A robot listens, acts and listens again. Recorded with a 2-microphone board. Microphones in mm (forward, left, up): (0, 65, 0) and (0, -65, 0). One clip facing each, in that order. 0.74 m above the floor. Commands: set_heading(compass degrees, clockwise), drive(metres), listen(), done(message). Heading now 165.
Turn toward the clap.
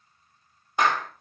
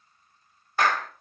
set_heading(145)
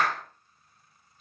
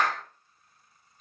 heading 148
done("Found it: a clap, straight ahead.")